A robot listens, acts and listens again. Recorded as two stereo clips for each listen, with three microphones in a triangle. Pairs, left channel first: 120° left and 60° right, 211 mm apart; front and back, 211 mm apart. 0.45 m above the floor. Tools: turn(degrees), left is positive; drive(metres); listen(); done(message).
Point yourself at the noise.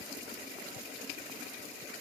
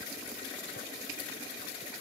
listen()
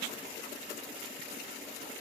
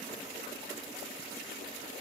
listen()
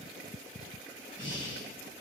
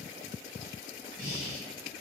turn(degrees=135)
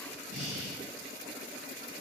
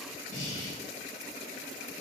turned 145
turn(degrees=-10)
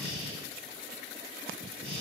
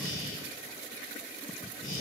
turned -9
done("Found it: breathing, straight ahead, 1 to 2 m away.")